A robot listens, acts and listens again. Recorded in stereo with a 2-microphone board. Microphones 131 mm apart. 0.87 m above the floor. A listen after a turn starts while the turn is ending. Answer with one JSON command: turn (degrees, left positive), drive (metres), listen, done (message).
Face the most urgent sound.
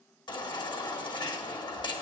{"turn": 35}
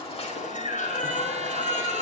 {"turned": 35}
{"turn": 110}
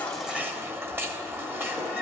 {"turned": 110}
{"turn": -15}
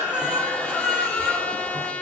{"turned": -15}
{"done": "Facing the baby crying."}